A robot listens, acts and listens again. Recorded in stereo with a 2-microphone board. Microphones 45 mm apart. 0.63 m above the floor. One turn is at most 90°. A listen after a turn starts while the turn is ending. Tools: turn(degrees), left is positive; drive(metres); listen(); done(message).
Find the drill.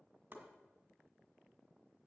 listen()
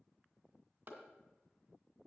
listen()
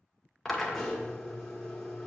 turn(degrees=30)
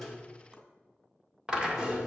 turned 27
turn(degrees=-20)
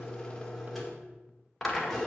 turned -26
done("Found it: a drill, straight ahead, 1 to 2 m away.")